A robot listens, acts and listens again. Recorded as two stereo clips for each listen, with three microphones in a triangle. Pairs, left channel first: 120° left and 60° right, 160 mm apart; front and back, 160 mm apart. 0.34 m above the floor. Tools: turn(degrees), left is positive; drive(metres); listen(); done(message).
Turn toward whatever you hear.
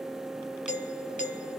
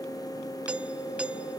turn(degrees=100)
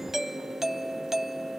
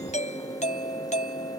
turn(degrees=30)
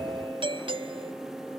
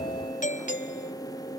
turn(degrees=-10)
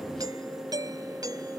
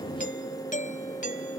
done("Found it: a doorbell, straight ahead.")